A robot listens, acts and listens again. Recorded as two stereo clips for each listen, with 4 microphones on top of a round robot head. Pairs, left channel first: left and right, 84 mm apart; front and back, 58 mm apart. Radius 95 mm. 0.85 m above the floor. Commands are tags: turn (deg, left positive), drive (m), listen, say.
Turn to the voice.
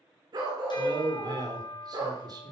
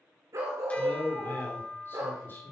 <turn deg="-55"/>
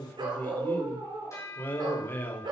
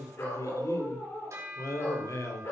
<turn deg="25"/>
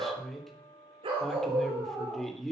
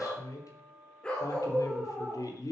<say>Facing the man speaking.</say>